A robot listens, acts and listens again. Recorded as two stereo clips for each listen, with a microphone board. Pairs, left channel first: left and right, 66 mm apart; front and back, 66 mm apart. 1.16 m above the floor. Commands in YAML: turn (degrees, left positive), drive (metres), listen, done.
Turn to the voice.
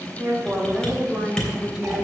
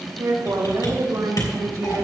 turn: -165
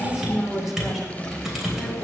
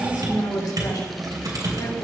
done: "Found it: a woman speaking, straight ahead."